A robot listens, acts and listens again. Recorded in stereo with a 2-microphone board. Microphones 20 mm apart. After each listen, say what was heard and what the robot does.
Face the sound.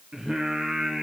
The singing: about 30° right or 150° right. Turn 30° right.
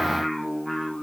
So it is at 10° left. Turn 10° left.
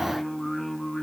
The singing is now 15° left. Turn 15° left.
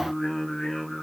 The singing is now 15° left. Turn 15° left.
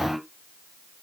Facing the singing.